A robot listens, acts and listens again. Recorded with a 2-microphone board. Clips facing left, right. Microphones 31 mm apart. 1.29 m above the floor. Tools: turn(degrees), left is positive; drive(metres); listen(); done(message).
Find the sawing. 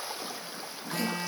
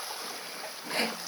turn(degrees=-50)
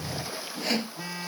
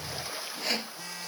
done("Facing the sawing.")